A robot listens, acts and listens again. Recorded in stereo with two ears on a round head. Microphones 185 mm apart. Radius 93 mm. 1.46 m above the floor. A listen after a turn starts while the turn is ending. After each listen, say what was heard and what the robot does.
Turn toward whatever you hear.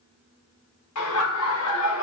The laughter: about 70° left or 110° left. Turn 70° left.
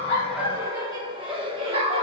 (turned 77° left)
So it is at 30° right. Turn 30° right.
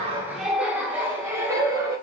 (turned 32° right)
The laughter is now 20° right. Turn 20° right.
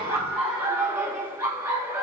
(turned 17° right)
The laughter is now 10° right. Turn 10° right.
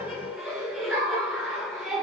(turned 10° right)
Facing the laughter.